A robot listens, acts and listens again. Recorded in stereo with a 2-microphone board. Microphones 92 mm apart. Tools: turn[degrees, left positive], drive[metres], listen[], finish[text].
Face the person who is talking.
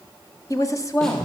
Thought: The woman speaking: about 35° left or 145° left.
Action: turn[35]
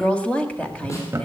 Thought: So it is at 15° left.
Action: turn[15]
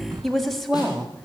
Action: finish[Found it: a woman speaking, straight ahead.]